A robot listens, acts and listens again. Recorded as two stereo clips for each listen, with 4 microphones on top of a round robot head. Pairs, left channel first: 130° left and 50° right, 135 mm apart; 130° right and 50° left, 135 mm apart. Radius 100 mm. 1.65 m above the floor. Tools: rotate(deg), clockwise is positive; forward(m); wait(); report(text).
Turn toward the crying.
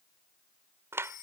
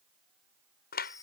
wait()
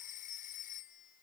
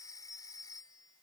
wait()
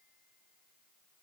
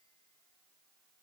report("I can't make out crying to turn to.")